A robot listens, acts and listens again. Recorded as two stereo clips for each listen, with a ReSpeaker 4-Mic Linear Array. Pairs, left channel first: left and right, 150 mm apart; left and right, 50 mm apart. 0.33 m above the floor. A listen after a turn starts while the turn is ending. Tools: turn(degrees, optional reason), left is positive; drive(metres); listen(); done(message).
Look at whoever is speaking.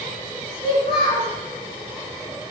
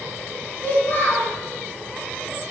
turn(degrees=40, reason="The child speaking: about 40° left or 140° left.")
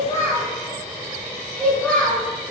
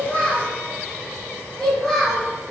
turn(degrees=10, reason="So it is at 10° left.")
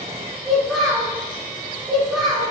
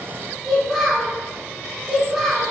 done("Found it: a child speaking, straight ahead.")